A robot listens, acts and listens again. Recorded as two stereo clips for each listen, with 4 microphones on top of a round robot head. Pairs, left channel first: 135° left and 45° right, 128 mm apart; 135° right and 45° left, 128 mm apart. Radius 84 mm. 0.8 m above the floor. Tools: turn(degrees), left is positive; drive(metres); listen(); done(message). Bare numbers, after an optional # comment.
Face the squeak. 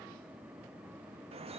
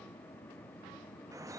listen()
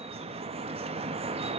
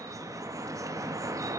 listen()
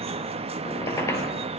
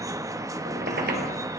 # The squeak: 65° left.
turn(65)
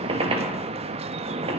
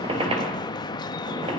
done("Facing the squeak.")